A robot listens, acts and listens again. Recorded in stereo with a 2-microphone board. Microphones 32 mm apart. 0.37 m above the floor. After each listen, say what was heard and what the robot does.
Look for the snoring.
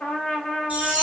Keep listening.
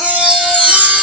Keep listening.
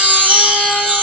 I can't make out snoring, only a trumpet and a chime.